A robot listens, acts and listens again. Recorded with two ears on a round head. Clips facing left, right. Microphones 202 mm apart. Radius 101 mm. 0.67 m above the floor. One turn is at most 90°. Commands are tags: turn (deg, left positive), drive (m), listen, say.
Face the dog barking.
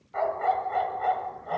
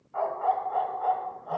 <turn deg="30"/>
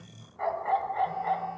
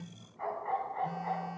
<turn deg="90"/>
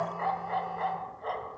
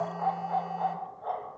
<turn deg="40"/>
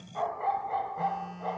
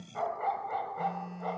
<turn deg="-15"/>
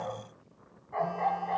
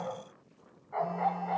<say>Facing the dog barking.</say>